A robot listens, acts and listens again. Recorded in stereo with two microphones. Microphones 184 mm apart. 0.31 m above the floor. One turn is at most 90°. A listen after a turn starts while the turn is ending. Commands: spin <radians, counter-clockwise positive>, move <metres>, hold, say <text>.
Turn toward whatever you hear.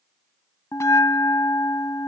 spin 0.52
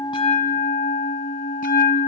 spin 1.57
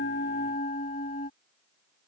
spin 0.87
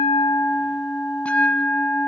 say Facing the bell.